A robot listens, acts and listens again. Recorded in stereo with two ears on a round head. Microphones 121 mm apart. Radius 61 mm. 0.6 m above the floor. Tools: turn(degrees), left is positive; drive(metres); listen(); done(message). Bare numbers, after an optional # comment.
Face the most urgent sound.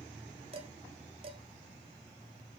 listen()
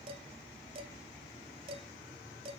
listen()
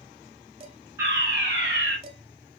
# The fire alarm: about 20° right or 160° right.
turn(-20)
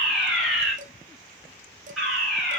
done("Facing the fire alarm.")